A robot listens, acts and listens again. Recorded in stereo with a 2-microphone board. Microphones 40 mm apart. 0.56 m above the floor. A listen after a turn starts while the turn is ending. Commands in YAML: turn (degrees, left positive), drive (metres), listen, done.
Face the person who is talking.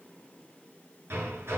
listen: true
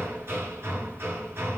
listen: true
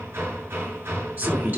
turn: -50
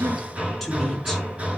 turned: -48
listen: true
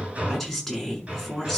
done: "Facing the woman speaking, over 4 m away."